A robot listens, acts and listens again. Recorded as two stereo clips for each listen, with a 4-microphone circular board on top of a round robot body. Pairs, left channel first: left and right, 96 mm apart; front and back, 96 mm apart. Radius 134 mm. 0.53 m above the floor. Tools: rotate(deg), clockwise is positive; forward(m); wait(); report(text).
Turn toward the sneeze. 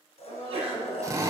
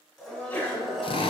rotate(75)
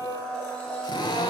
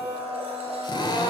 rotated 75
report("Facing where the sneeze came from. I can't hear it now.")